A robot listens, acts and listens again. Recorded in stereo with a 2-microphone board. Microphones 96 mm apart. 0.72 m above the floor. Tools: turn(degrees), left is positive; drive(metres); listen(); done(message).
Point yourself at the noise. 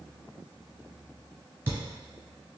turn(degrees=-25)
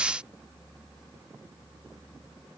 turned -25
listen()
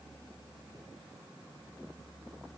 done("I heard a thud, but can't make it out now. It was about straight ahead or 130° right.")